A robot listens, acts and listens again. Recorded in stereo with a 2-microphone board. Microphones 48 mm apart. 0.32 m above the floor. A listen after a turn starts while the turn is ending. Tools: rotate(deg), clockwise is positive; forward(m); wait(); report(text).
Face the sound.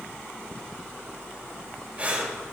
rotate(25)
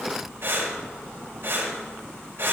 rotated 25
rotate(125)
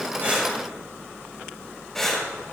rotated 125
report("Found it: breathing, straight ahead.")